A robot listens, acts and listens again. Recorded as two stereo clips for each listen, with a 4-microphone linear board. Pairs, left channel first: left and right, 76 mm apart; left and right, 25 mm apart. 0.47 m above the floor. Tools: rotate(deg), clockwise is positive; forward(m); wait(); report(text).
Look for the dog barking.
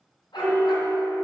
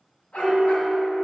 rotate(-90)
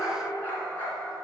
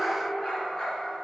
rotate(-25)
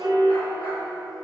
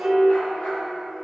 wait()
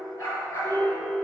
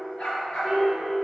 rotate(-35)
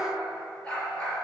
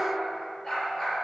rotate(-10)
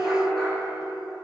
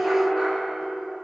wait()
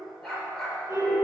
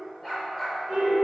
report("Found it: a dog barking, straight ahead.")